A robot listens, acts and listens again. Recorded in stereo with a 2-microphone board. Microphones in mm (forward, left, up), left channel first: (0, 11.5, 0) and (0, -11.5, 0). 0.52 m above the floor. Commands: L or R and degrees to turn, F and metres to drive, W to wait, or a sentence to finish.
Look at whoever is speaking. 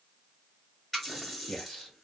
L50
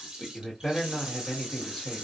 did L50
L15
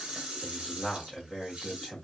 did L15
Facing the man speaking.